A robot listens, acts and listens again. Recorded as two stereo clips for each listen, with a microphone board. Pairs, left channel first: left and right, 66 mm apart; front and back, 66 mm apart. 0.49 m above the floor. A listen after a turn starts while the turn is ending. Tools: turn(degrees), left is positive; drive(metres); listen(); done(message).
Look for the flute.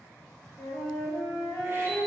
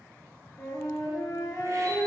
done("Facing the flute, 1 to 2 m away.")